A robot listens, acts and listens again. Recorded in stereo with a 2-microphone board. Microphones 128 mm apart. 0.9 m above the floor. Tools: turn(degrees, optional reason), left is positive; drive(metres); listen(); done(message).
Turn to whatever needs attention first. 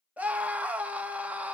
turn(degrees=-30)
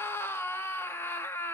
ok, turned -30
turn(degrees=20, reason="So it is at 20° left.")
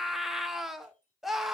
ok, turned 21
done("Facing the scream, 1 to 2 m away.")